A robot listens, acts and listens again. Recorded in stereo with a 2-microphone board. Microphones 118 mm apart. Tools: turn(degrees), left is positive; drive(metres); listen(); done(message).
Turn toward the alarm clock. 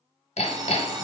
turn(degrees=-35)
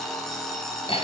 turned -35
done("Found it: an alarm clock, straight ahead.")